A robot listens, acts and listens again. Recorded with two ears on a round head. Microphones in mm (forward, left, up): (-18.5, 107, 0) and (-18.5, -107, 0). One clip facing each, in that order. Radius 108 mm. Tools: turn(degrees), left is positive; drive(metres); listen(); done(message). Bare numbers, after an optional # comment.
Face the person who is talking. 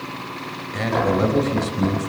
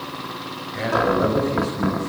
# The man speaking: about 55° left or 125° left.
turn(55)
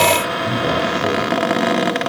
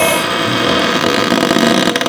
listen()
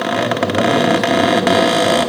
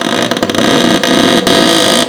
listen()
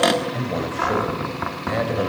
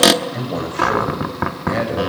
done("Found it: a man speaking, straight ahead, over 4 m away.")